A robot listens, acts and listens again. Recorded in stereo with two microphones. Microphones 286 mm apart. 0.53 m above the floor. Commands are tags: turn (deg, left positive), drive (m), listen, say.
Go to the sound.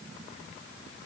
<listen/>
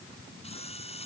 <turn deg="20"/>
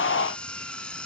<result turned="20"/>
<drive m="1.0"/>
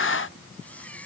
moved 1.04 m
<drive m="1.0"/>
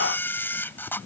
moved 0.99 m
<drive m="1.0"/>
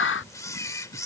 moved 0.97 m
<turn deg="10"/>
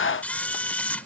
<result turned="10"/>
<drive m="1.0"/>
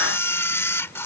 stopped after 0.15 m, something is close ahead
<turn deg="10"/>
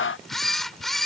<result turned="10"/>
<say>Arrived at the camera shutter, straight ahead.</say>